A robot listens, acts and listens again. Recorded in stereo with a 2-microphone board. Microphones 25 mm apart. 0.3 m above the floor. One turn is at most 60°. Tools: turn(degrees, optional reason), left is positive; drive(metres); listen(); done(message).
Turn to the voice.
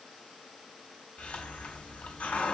listen()
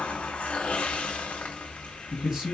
turn(degrees=-25, reason="The man speaking: about 25° right or 155° right.")
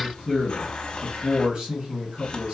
turn(degrees=-60, reason="So it is at 125° right.")
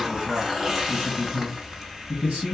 turn(degrees=-60, reason="The man speaking is now 60° right.")
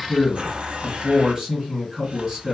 turn(degrees=-25, reason="The man speaking is now 25° right.")
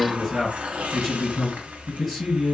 turn(degrees=15, reason="The man speaking is now 15° left.")
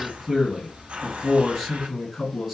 done("Found it: a man speaking, straight ahead.")